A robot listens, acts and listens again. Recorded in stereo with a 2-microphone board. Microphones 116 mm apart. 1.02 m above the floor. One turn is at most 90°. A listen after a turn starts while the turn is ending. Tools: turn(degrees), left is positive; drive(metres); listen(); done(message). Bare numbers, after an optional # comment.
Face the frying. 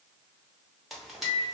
turn(30)
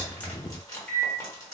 # So it is at 150° left.
turn(90)
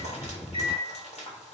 # The frying is now 80° left.
turn(80)
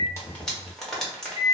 done("Found it: frying, straight ahead, 1 to 2 m away.")